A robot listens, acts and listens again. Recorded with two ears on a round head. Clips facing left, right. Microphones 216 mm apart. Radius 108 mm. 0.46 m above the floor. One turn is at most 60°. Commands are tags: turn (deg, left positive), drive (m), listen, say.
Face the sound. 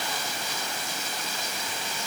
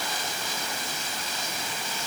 <listen/>
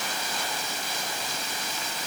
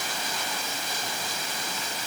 <listen/>
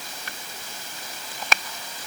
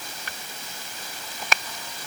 <say>I can't make out anything.</say>